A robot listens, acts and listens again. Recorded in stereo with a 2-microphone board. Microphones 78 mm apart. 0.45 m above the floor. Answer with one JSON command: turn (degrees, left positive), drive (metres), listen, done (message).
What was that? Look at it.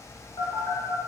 {"turn": 55}
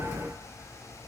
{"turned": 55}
{"listen": true}
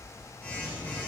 {"turn": 25}
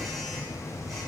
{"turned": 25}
{"done": "Facing the phone buzzing, 1 to 2 m away."}